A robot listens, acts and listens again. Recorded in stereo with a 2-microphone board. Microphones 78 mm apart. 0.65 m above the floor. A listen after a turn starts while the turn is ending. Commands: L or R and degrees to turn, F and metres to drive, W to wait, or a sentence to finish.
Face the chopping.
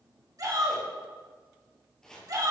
L30
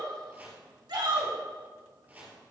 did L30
R25
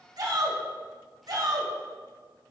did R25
W
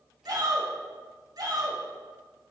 W
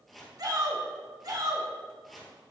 Facing the chopping, 2 to 4 m away.